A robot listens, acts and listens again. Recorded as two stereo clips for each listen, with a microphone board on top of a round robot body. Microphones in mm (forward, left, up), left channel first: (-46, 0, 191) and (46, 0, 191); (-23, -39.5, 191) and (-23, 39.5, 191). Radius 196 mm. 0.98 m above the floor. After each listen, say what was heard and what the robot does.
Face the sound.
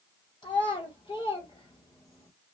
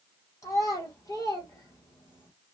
The child speaking: 135° right. Turn 135° right.
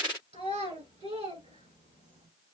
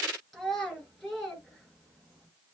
Facing the child speaking.